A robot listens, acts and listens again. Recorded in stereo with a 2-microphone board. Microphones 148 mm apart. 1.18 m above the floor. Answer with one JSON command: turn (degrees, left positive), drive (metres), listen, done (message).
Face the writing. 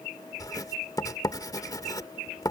{"turn": 25}
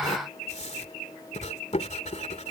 {"turn": 130}
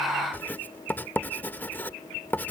{"turn": 10}
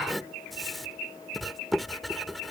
{"done": "Facing the writing."}